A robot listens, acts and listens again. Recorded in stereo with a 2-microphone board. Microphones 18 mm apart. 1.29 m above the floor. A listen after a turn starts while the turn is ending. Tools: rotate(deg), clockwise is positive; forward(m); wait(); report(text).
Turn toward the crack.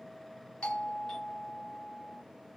wait()
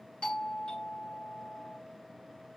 wait()
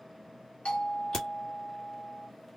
rotate(-25)
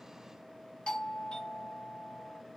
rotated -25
wait()
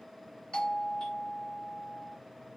report("I heard a crack, but can't make it out now. It was about straight ahead or 130° left.")